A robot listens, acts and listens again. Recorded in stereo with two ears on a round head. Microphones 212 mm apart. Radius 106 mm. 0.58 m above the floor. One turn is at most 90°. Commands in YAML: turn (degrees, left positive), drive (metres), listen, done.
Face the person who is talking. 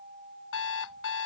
listen: true
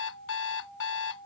listen: true
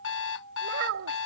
turn: -60
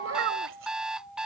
turn: -55
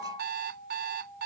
listen: true
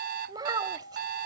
turn: -20
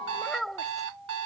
done: "Facing the child speaking."